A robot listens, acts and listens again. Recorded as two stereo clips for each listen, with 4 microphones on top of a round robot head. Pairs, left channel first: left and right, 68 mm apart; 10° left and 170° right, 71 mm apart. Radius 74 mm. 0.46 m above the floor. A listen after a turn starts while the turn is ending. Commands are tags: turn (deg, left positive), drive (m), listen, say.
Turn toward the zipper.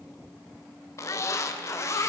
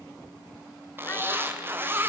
<turn deg="130"/>
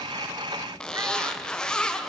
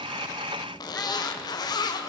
<turn deg="15"/>
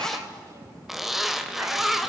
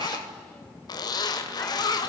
<say>Found it: a zipper, straight ahead.</say>